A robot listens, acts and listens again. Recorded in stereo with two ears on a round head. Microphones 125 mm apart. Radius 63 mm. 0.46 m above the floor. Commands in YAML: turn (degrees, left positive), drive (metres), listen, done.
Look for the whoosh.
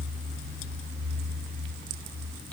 listen: true
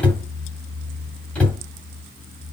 listen: true
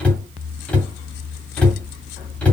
done: "I can't make out a whoosh, only a cupboard door."